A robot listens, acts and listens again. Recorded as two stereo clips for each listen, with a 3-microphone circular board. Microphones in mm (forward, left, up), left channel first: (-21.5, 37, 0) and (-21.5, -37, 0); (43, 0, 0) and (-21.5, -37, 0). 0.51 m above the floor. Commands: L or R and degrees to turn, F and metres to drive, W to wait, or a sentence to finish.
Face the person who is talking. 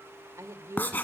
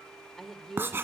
R55
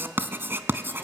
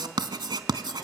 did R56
W
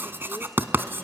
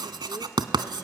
W
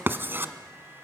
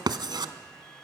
I heard a woman speaking from this way, but can't make it out now.